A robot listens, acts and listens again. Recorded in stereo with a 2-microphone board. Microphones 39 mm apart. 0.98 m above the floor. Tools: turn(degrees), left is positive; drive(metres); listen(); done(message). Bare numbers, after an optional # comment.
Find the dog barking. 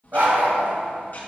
# The dog barking: about 55° right or 125° right.
turn(-55)
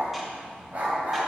# So it is at 60° right.
turn(-60)
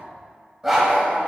# The dog barking is now 10° right.
turn(-10)
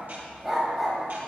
done("Facing the dog barking.")